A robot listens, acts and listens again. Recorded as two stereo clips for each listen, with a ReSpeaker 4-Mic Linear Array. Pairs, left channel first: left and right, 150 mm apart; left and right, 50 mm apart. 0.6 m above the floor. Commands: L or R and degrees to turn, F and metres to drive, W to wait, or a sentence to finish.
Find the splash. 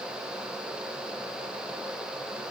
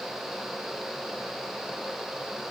W
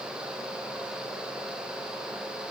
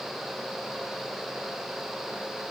W
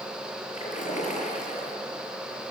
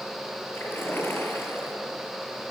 L50
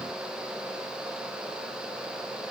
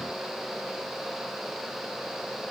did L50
W
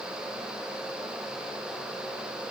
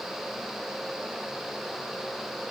I heard a splash, but can't make it out now. It was about straight ahead or 80° left.